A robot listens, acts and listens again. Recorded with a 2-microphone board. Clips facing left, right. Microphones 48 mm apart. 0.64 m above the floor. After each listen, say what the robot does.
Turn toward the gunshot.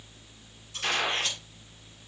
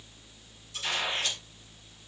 Turn 60° left.
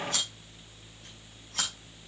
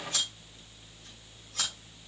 Keep listening.
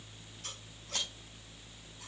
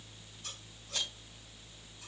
I heard a gunshot, but can't make it out now. It was about straight ahead or 60° left.